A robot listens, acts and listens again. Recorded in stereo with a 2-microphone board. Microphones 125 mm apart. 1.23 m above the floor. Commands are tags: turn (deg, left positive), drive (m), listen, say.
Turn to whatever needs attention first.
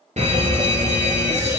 <turn deg="-65"/>
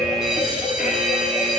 <say>Found it: a fire alarm, straight ahead, 2 to 4 m away.</say>